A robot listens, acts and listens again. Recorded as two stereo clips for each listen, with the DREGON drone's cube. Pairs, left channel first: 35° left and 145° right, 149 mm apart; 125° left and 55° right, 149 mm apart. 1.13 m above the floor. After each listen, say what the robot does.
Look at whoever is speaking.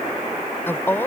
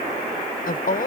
Turn 110° left.
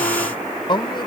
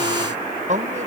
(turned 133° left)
Turn 25° right.
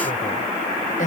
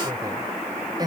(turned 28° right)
Facing the woman speaking.